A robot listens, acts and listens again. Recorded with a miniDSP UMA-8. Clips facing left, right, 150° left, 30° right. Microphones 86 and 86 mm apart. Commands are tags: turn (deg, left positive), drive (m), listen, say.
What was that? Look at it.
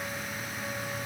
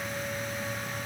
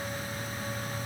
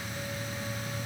<listen/>
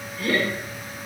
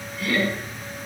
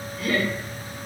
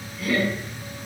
<turn deg="130"/>
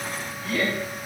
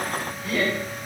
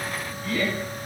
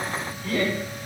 <turn deg="-15"/>
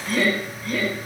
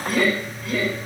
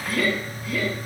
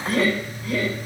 <say>Facing the laughter, 2 to 4 m away.</say>